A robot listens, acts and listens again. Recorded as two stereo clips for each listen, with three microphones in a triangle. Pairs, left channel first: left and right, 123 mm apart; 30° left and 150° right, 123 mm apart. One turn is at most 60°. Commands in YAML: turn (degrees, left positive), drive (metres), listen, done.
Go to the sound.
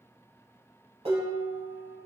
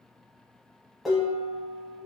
turn: -60
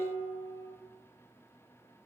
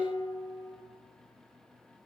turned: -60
turn: -10
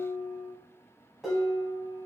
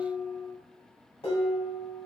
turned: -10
drive: 1.0
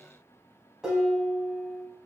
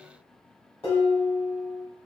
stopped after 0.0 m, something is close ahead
done: "Blocked. The dishes clattering is further on, straight ahead."